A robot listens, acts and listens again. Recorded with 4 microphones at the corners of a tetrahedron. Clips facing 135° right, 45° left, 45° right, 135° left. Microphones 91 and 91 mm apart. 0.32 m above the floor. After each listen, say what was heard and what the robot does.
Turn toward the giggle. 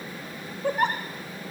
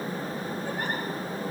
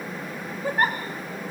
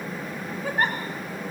The giggle: 130° right. Turn 130° right.
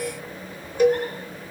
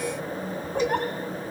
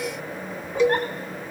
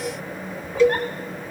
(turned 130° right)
Keep listening.
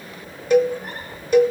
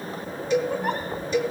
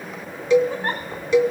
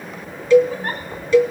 Keep listening.
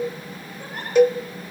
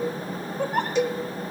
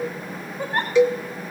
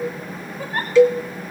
The giggle is now 20° left. Turn 20° left.
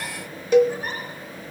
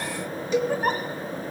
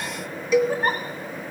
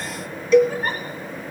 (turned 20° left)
Found it: a giggle, straight ahead.